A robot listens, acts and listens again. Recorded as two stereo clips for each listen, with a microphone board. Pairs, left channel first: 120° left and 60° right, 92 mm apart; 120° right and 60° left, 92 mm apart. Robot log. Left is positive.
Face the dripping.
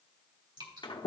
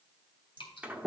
note: The dripping: 90° right.
cmd yaw -90
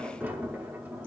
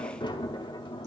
cmd idle
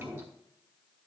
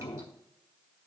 cmd idle
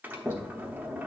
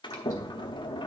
end: I heard dripping from this way, but can't make it out now.